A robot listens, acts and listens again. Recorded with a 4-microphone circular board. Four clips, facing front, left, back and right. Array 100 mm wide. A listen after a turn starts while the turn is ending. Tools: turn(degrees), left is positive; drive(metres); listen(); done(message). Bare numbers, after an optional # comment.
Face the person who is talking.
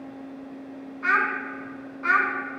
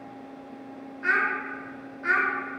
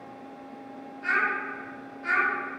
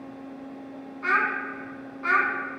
# The child speaking: 45° right.
turn(-45)
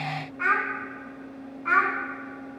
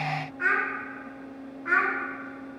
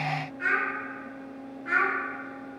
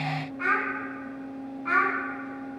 # The child speaking is now 25° right.
turn(-25)
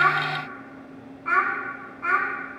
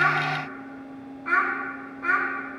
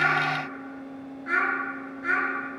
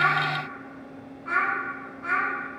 # The child speaking is now 10° left.
turn(10)
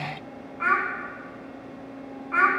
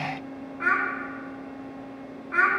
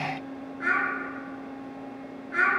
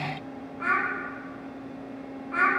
done("Found it: a child speaking, straight ahead, 2 to 4 m away.")